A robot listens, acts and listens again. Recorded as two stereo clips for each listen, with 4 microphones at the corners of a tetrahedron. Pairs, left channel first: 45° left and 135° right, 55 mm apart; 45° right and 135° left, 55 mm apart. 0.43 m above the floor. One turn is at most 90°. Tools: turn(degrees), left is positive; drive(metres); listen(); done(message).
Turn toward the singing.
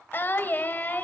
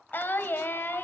done("Facing the singing.")